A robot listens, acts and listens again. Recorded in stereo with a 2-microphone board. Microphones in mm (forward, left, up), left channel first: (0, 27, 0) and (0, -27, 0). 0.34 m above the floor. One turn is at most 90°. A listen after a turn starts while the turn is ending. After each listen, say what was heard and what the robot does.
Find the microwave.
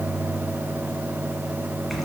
Keep listening.
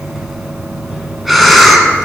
Keep listening.
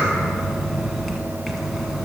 I can't make out a microwave, only breathing.